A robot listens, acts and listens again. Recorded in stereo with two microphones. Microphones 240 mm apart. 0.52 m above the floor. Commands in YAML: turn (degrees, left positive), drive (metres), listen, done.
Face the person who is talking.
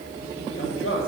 turn: 60
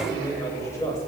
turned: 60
turn: 15
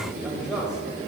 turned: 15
done: "Facing the man speaking."